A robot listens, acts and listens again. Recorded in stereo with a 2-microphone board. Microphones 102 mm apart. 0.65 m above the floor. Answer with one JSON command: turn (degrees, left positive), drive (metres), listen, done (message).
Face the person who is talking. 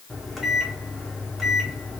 {"listen": true}
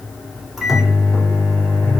{"listen": true}
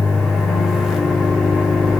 {"done": "I can't make out anyone speaking to turn to."}